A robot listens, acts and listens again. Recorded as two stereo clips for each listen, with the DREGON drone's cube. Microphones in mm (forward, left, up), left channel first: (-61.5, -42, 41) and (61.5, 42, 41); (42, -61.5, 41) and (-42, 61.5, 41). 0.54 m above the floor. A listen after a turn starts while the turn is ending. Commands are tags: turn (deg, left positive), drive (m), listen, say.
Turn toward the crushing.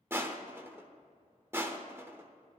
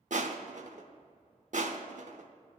<turn deg="105"/>
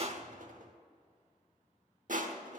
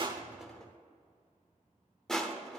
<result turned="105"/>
<turn deg="30"/>
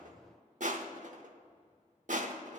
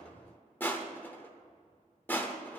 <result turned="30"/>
<turn deg="20"/>
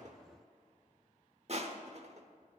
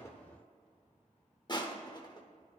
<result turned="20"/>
<say>Found it: crushing, straight ahead, under 1 m away.</say>